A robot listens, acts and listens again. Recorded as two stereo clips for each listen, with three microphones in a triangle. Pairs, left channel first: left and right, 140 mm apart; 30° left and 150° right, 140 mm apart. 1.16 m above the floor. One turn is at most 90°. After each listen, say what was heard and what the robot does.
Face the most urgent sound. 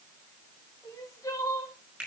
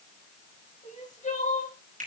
The crying: 30° left. Turn 30° left.
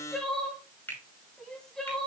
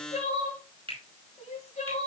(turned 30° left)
Facing the crying, 1 to 2 m away.